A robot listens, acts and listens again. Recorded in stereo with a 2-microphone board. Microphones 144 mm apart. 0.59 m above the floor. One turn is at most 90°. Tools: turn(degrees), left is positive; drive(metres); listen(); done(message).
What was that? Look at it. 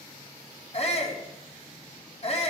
turn(degrees=45)
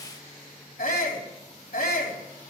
turn(degrees=90)
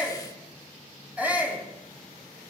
turn(degrees=-10)
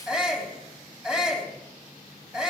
done("Facing the shout, 2 to 4 m away.")